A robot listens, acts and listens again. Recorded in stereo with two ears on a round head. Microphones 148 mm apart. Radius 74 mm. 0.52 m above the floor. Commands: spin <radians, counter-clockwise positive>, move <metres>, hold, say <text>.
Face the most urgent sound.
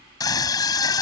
spin 0.44
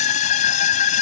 spin 2.27
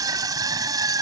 spin -0.44
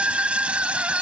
say Found it: a scream, straight ahead.